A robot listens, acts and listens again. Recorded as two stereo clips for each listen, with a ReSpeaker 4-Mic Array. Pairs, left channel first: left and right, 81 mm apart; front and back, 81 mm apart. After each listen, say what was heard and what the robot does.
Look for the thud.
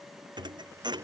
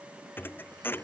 The thud: 65° right. Turn 65° right.
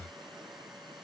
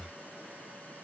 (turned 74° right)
Nothing new. It was at 10° left. Turn 10° left.
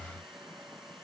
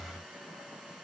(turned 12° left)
I heard a thud from this way, but can't make it out now.